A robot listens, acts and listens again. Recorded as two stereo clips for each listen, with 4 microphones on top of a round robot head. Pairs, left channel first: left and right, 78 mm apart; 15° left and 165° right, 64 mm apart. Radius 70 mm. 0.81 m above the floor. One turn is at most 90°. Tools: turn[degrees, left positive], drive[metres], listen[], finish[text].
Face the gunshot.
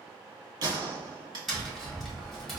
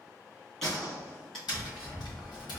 Thought: The gunshot: 70° right.
Action: turn[-70]
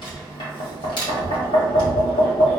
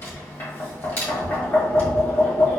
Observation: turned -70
Action: finish[Facing where the gunshot came from. I can't hear it now.]